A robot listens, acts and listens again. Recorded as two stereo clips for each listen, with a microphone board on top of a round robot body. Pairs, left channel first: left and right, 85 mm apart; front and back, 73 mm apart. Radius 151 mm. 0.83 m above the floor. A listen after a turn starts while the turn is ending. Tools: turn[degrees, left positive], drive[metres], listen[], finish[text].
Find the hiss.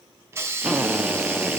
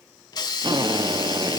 Thought: The hiss: 30° right.
Action: turn[-30]
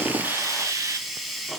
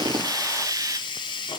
Action: finish[Facing the hiss.]